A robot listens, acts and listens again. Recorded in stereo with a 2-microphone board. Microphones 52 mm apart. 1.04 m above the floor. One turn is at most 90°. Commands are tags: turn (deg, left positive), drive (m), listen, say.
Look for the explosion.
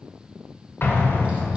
<turn deg="40"/>
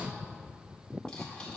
<listen/>
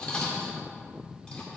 <say>I heard an explosion, but can't make it out now. It was about straight ahead or 100° left.</say>